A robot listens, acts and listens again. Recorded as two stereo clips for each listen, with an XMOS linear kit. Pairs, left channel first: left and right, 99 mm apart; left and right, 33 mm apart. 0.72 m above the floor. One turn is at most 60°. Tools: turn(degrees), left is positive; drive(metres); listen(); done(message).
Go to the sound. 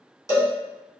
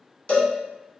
turn(degrees=30)
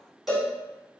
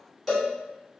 drive(metres=1.0)
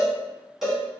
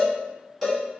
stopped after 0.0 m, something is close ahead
done("Something is in my way. I am facing the cowbell but have not reached it.")